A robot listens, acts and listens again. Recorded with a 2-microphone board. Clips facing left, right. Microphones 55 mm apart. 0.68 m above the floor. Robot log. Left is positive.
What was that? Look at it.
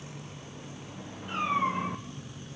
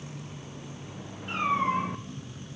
cmd yaw -90
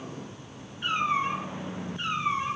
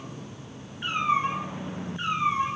note: So it is at 25° right.
cmd yaw -25
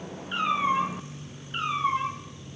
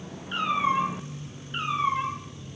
end: Facing the cat meowing, 2 to 4 m away.